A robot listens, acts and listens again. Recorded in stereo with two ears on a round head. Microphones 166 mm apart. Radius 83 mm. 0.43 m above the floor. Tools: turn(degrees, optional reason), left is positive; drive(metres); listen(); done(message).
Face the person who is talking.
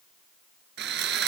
listen()
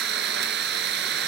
listen()
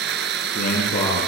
turn(degrees=45, reason="The man speaking: about 45° left or 135° left.")
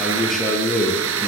done("Facing the man speaking.")